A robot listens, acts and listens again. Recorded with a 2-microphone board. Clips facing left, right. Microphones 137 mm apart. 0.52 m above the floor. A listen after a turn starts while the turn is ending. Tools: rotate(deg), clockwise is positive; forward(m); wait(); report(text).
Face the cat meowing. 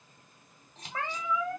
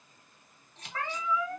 rotate(-25)
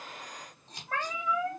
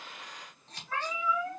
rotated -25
rotate(-130)
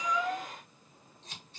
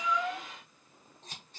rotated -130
wait()
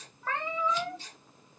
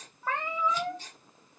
rotate(10)
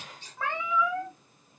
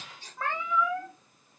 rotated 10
report("Found it: a cat meowing, straight ahead, 1 to 2 m away.")